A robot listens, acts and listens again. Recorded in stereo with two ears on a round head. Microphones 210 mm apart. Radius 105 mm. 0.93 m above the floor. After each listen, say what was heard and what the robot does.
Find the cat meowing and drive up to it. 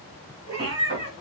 Turn 90° right.
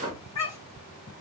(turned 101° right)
So it is at 15° left. Turn 15° left.
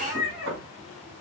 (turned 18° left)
Drive 1.0 m forward.
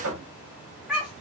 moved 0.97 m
Drive 1.0 m forward.
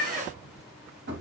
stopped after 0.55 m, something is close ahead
I am next to the cat meowing.